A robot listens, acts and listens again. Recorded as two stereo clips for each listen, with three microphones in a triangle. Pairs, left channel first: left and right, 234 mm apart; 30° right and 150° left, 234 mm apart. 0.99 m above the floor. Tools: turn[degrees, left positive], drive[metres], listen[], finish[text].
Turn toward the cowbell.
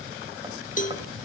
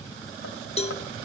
Thought: The cowbell: 35° left.
Action: turn[35]
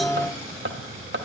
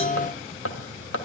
Action: listen[]
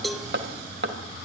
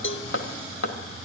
Action: finish[Facing the cowbell.]